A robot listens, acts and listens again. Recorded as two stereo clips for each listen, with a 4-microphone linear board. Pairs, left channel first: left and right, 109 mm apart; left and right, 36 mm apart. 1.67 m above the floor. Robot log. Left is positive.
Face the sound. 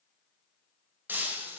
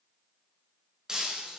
note: The breaking glass: about 15° right or 165° right.
cmd yaw -15
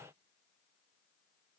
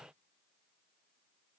cmd idle
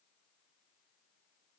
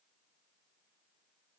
end: I heard breaking glass, but can't make it out now. It was about straight ahead or 150° right.